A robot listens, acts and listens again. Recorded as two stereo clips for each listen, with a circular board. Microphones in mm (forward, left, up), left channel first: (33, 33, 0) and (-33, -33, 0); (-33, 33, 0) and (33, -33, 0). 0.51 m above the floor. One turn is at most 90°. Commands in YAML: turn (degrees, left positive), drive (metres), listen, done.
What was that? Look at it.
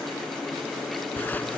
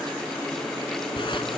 turn: 90
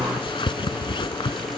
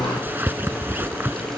turn: 20
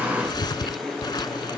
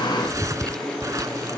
done: "Found it: a zipper, straight ahead."